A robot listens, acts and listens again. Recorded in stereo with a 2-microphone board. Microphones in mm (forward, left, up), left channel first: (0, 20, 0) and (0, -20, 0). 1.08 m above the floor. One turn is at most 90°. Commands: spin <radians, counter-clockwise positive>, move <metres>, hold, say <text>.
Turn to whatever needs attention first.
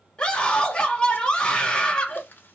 spin 0.35
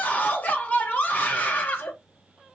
spin 1.57
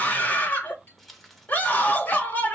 spin 0.79
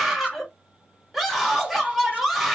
say Facing the scream.